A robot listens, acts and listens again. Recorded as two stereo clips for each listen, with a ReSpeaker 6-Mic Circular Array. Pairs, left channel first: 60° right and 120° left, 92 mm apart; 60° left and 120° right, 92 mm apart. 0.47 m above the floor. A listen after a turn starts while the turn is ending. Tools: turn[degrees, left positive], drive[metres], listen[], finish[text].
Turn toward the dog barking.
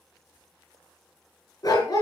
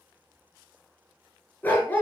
Thought: The dog barking: 10° right.
Action: turn[-10]
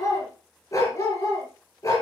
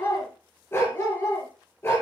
Action: finish[Found it: a dog barking, straight ahead.]